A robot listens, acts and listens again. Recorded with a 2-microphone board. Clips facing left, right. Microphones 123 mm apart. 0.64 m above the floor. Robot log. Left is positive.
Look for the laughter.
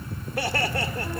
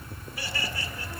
note: The laughter: about 65° left or 115° left.
cmd yaw +65
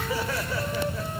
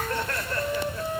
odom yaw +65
end: Facing the laughter, 2 to 4 m away.